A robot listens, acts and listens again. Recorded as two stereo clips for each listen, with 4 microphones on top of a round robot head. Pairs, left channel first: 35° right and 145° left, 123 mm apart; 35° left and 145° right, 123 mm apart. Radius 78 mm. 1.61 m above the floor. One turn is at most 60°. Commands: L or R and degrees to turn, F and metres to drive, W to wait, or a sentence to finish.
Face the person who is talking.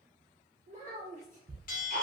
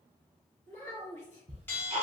Facing the child speaking.